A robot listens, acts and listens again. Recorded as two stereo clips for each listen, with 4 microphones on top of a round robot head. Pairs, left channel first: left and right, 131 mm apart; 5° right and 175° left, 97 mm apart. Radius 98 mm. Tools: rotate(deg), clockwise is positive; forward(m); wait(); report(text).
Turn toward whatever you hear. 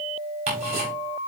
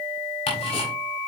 rotate(40)
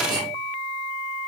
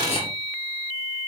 rotate(25)
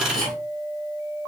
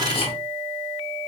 report("Facing the ticking, over 4 m away.")